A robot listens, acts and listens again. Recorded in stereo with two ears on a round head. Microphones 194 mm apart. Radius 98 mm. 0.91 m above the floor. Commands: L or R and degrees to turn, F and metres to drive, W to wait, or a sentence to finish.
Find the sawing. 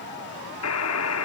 W
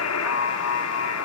W
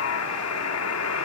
I can't make out sawing, only a buzzer.